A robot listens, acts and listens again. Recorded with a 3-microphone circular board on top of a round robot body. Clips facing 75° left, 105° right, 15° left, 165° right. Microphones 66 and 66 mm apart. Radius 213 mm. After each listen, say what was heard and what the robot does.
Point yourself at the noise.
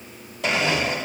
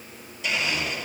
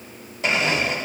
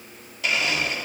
The blender: 70° left. Turn 70° left.
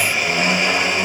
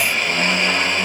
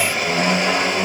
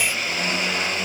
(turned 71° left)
Facing the blender, 2 to 4 m away.